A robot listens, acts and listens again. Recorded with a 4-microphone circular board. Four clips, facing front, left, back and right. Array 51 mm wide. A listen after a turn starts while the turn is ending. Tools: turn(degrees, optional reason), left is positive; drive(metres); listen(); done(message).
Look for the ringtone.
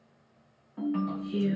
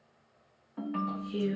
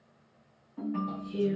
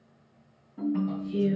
turn(degrees=70, reason="The ringtone: 70° left.")
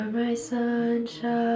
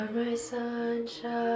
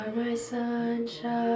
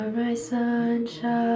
listen()
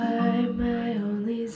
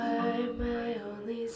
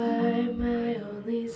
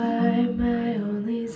listen()
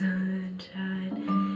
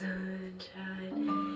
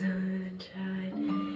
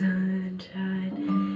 done("Facing the ringtone, under 1 m away.")